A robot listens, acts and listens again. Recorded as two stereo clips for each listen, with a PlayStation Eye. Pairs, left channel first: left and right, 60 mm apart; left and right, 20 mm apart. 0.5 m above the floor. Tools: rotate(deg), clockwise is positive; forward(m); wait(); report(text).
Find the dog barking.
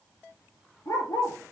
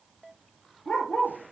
rotate(-90)
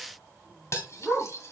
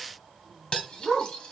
report("Facing the dog barking, 2 to 4 m away.")